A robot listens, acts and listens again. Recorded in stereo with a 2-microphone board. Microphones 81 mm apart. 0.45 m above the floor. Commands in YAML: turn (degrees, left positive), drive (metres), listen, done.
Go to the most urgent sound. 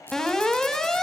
turn: 30
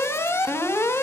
turn: 145
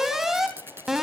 drive: 1.0
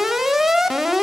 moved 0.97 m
drive: 1.0
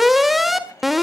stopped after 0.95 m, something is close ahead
done: "Arrived at the alarm, straight ahead."